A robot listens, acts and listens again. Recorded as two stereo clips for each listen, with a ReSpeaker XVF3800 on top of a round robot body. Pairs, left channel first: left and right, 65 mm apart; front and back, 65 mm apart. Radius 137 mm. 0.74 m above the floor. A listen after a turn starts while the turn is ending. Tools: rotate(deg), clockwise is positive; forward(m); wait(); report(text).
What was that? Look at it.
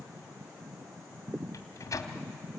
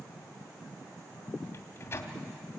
rotate(-55)
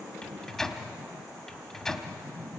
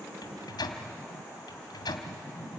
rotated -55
report("Found it: a microwave, straight ahead.")